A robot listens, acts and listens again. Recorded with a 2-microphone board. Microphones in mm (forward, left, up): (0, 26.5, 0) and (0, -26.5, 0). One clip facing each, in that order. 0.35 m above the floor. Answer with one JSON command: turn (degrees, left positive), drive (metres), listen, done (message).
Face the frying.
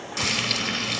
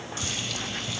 {"turn": 75}
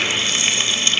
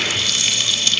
{"turn": 30}
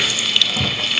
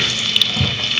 {"done": "Found it: frying, straight ahead."}